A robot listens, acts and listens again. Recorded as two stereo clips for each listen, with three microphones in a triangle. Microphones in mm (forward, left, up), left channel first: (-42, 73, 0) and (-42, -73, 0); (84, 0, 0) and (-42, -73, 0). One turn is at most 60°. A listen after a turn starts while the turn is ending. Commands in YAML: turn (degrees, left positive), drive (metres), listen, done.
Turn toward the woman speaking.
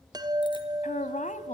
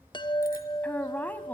turn: 60
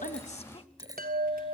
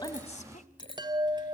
turn: 45
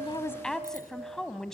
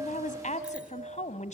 done: "Found it: a woman speaking, straight ahead."